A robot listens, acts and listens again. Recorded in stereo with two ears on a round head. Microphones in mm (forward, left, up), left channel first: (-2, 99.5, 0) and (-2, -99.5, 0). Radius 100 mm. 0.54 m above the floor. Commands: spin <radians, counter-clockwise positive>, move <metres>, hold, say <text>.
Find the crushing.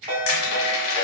spin 1.22
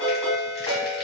hold
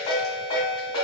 hold
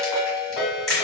say Found it: crushing, straight ahead, 1 to 2 m away.